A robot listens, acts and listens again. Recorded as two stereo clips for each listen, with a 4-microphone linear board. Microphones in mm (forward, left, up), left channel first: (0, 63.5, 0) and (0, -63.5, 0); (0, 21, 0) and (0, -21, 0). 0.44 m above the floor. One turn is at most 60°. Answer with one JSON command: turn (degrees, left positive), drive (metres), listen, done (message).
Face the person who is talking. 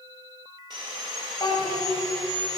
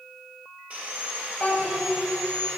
{"turn": 40}
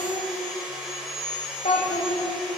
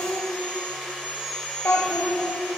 {"turn": 60}
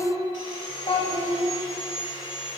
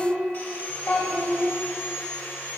{"turn": 45}
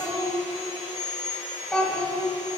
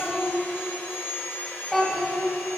{"turn": 10}
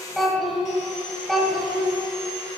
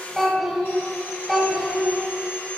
{"done": "Facing the child speaking."}